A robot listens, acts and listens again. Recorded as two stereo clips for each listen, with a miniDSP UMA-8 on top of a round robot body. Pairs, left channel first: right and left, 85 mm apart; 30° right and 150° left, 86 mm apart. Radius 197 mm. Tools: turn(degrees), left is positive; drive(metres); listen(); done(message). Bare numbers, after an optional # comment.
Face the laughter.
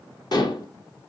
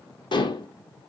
listen()
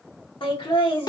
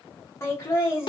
# The laughter: 90° right.
turn(-90)
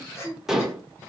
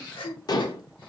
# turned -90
# The laughter is now 30° right.
turn(-30)
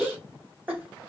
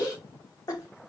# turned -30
# The laughter is now 20° left.
turn(20)
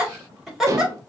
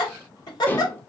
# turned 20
done("Found it: laughter, straight ahead.")